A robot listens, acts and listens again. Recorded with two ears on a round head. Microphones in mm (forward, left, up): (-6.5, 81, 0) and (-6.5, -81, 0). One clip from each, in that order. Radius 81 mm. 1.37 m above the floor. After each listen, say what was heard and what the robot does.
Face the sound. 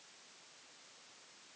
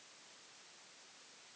Keep listening.
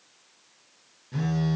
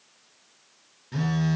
The phone buzzing: about 30° right or 150° right. Turn 30° right.
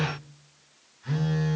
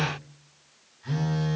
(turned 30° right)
Found it: a phone buzzing, straight ahead, under 1 m away.